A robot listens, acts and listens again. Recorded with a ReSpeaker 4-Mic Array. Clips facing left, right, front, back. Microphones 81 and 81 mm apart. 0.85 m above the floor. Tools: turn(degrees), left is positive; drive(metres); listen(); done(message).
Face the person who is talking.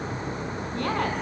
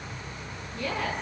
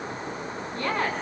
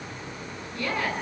turn(degrees=55)
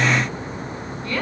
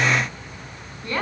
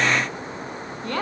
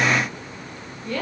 turn(degrees=-25)
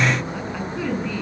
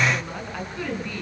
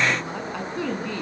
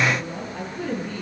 done("Found it: a woman speaking, straight ahead.")